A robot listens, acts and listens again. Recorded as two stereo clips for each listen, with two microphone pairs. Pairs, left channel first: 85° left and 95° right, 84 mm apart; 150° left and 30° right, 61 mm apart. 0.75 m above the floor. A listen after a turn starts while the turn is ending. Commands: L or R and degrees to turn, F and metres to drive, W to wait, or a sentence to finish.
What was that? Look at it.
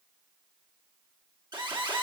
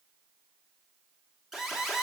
R115
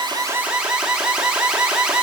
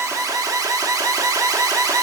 R15
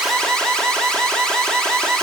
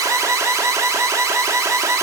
Facing the alarm, 1 to 2 m away.